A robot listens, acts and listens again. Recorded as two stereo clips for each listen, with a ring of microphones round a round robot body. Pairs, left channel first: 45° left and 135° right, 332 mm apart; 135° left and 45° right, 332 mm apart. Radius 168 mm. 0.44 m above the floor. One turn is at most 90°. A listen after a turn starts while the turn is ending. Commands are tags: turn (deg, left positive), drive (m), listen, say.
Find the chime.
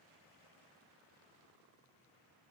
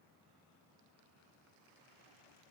<listen/>
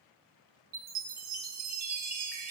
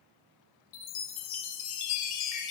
<turn deg="90"/>
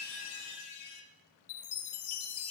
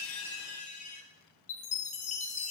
<turn deg="65"/>
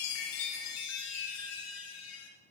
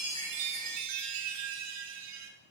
<say>Found it: a chime, straight ahead.</say>